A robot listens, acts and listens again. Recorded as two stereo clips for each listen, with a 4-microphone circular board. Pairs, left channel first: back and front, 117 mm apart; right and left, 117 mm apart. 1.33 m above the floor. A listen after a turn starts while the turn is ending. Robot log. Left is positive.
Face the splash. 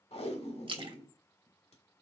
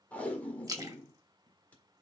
note: The splash: 35° left.
cmd yaw +35
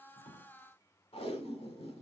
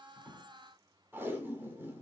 end: Facing where the splash came from. I can't hear it now.